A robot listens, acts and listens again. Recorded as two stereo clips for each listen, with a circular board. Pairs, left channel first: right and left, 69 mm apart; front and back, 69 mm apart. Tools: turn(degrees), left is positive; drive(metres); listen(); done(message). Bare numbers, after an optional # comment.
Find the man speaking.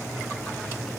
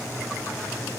listen()
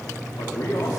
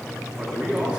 # The man speaking: 105° right.
turn(-105)
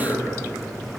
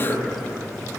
# The man speaking is now 45° right.
turn(-45)
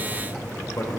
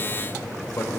# The man speaking is now 55° right.
turn(-55)
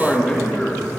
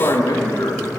# The man speaking is now 15° right.
turn(-15)
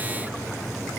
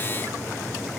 listen()
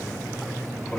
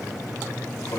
listen()
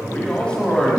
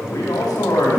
# The man speaking is now 15° right.
turn(-15)
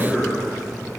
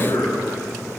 done("Found it: a man speaking, straight ahead.")